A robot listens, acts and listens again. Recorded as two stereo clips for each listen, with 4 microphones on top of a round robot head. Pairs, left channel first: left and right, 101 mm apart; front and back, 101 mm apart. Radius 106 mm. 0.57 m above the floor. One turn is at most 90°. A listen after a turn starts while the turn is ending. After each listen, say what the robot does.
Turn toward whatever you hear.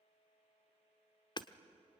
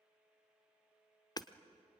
Turn 50° left.
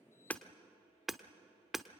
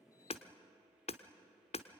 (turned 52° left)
Facing the hammering.